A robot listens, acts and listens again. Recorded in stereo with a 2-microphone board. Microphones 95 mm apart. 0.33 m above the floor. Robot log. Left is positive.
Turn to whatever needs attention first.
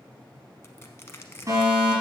note: The fire alarm: about 35° right or 145° right.
cmd yaw -35
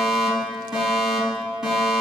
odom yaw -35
end: Facing the fire alarm, over 4 m away.